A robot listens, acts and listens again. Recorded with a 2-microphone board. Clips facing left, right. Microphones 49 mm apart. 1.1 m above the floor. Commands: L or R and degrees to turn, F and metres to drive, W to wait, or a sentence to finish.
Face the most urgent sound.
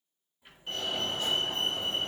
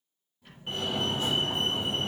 R25
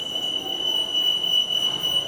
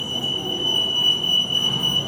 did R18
R140
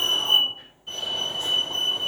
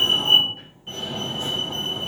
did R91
R40
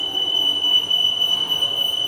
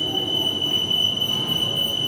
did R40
Facing the fire alarm, 2 to 4 m away.